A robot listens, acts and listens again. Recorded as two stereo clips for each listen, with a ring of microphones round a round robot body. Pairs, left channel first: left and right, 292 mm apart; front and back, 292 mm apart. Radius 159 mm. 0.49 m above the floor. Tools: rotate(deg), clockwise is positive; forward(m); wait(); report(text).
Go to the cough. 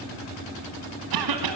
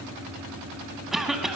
rotate(90)
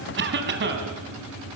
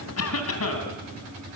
rotate(40)
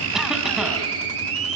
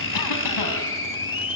wait()
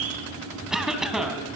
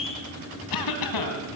forward(1.0)
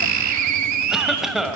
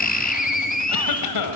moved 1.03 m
forward(1.0)
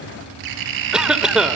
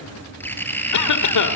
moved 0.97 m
forward(1.0)
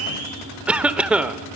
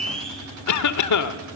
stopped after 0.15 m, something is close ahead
report("I am next to the cough.")